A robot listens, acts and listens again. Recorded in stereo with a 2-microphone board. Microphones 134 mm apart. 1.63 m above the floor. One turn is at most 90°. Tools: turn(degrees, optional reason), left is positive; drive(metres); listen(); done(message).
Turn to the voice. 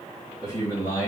turn(degrees=20, reason="The man speaking: about 20° left or 160° left.")
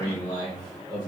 turn(degrees=25, reason="The man speaking: about 25° left or 155° left.")
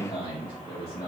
turn(degrees=25, reason="The man speaking: about 25° left or 155° left.")
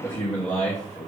turn(degrees=20, reason="The man speaking: about 20° left or 160° left.")
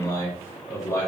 turn(degrees=20, reason="The man speaking: about 20° left or 160° left.")
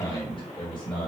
turn(degrees=35, reason="The man speaking: about 35° left or 145° left.")
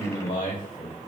turn(degrees=90, reason="So it is at 105° left.")
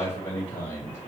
turn(degrees=20, reason="The man speaking is now 20° left.")
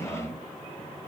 done("Facing the man speaking, 1 to 2 m away.")